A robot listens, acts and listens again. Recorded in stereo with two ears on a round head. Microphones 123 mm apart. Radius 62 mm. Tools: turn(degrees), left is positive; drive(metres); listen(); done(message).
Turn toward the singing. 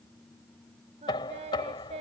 turn(degrees=-50)
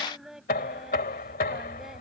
done("Facing the singing.")